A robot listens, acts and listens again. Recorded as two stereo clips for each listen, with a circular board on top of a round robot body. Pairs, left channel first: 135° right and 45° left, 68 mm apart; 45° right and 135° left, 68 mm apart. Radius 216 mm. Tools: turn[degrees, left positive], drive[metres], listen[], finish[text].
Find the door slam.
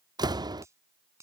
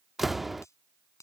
Thought: The door slam: 50° left.
Action: turn[50]
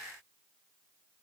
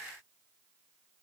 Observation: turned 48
Action: finish[Facing where the door slam came from. I can't hear it now.]